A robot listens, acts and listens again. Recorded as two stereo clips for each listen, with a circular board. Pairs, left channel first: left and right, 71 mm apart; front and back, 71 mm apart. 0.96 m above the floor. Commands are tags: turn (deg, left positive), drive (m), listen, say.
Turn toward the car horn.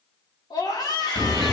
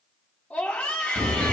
<turn deg="165"/>
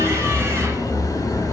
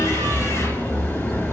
<turn deg="50"/>
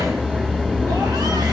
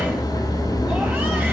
<turn deg="-20"/>
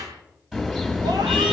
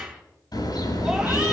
<say>Facing the car horn, over 4 m away.</say>